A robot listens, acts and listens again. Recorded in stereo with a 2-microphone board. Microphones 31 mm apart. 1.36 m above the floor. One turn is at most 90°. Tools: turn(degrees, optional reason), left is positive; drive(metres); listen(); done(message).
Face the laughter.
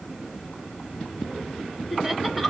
turn(degrees=-30)
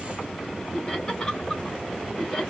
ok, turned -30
turn(degrees=15, reason="So it is at 15° left.")
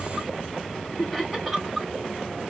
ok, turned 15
done("Facing the laughter.")